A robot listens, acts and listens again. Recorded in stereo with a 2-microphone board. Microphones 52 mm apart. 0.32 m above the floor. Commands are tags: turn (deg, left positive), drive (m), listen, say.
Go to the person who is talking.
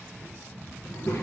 <turn deg="70"/>
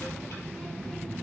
<turn deg="15"/>
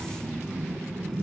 <drive m="1.0"/>
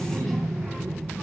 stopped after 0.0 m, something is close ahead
<say>Something is in my way. I am facing the child speaking but have not reached it.</say>